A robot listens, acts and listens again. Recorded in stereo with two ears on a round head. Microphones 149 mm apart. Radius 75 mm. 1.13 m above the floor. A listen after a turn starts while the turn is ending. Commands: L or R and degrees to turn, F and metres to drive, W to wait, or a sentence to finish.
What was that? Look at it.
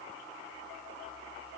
W
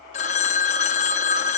L45
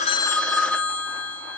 Found it: a phone ringing, straight ahead, under 1 m away.